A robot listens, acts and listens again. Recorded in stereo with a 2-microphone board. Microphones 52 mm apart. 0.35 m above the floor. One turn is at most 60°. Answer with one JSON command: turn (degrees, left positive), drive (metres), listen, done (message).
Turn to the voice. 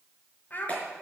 {"turn": 35}
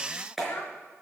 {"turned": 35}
{"turn": 60}
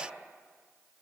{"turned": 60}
{"turn": 50}
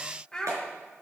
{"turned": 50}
{"turn": 15}
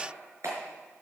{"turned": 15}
{"listen": true}
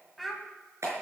{"done": "Found it: a child speaking, straight ahead, 1 to 2 m away."}